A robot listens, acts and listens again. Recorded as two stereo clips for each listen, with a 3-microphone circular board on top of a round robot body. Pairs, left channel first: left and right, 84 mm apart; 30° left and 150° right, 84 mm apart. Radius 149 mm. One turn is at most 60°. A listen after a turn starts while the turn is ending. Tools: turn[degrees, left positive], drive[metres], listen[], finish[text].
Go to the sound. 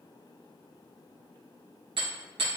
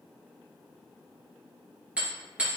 Thought: The hammering: 75° right.
Action: turn[-60]
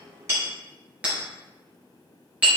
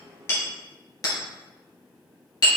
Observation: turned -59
Thought: The hammering is now 15° right.
Action: turn[-15]
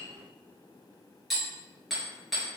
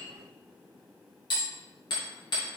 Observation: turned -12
Action: drive[1.0]
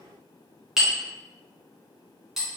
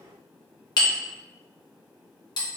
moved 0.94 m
Action: drive[1.0]
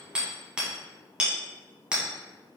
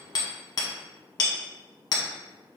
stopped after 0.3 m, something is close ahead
Thought: The hammering is now 10° right.
Action: turn[-10]
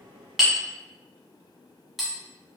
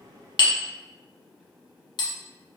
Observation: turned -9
Action: finish[I am next to the hammering.]